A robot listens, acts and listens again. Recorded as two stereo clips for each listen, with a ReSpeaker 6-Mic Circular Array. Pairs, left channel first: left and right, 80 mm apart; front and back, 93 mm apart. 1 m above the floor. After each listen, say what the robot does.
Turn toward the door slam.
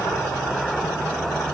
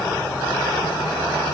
Keep listening.
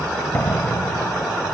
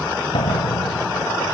Turn 20° left.
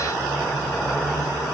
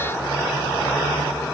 Facing where the door slam came from. I can't hear it now.